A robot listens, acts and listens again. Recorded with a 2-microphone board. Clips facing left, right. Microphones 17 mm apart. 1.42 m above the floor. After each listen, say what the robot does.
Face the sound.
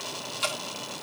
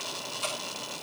Turn 60° left.
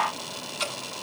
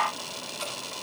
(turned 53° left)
Turn 65° left.
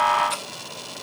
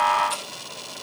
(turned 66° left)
Keep listening.
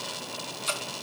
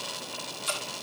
Facing the dripping, over 4 m away.